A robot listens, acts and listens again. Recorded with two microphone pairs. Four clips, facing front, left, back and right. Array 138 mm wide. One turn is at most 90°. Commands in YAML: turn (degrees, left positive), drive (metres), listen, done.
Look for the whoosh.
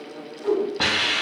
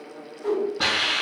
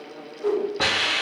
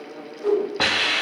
turn: -90
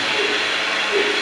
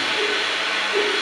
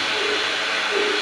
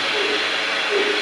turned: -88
turn: -50
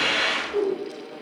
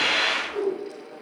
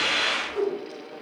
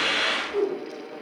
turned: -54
done: "Facing the whoosh."